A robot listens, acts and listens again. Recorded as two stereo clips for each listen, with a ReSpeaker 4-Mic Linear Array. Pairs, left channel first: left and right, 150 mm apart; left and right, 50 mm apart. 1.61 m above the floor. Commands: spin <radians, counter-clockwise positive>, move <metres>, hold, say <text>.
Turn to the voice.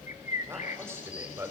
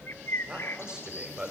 spin -0.26
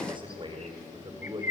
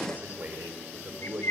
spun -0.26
spin -2.62
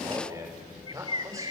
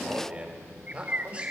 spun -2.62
spin -0.35
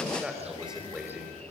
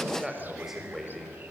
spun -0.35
say Facing the man speaking, over 4 m away.